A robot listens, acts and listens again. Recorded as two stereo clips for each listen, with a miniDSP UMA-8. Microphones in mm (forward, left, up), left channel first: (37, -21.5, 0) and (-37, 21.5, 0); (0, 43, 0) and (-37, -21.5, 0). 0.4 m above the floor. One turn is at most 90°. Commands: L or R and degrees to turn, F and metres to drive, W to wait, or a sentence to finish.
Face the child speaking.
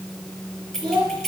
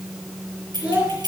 L90
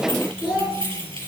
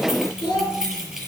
L75
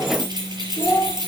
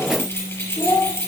L30
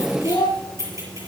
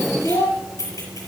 L15
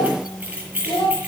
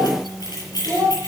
Found it: a child speaking, straight ahead.